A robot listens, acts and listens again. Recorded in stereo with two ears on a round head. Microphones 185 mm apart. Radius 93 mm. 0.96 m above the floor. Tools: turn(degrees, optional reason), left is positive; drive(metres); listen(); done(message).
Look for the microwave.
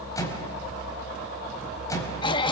turn(degrees=15, reason="The microwave: about 15° left or 165° left.")
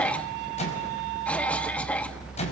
turn(degrees=145, reason="So it is at 145° left.")
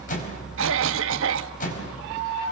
turn(degrees=40, reason="The microwave is now 40° left.")
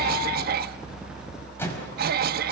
turn(degrees=10, reason="The microwave is now 10° left.")
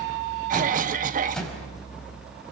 done("Facing the microwave.")